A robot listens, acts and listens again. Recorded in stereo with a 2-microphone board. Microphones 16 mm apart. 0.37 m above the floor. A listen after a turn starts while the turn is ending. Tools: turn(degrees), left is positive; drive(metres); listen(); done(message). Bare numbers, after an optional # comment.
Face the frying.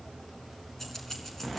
listen()
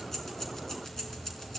listen()
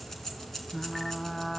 # The frying: about 20° left or 160° left.
turn(20)
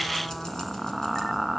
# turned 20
done("Found it: frying, straight ahead, 1 to 2 m away.")